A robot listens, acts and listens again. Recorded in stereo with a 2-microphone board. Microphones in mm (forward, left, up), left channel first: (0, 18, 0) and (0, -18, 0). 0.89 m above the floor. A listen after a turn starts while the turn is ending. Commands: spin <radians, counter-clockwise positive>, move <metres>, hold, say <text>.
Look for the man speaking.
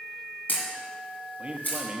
spin -0.61
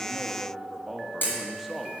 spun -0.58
say Found it: a man speaking, straight ahead.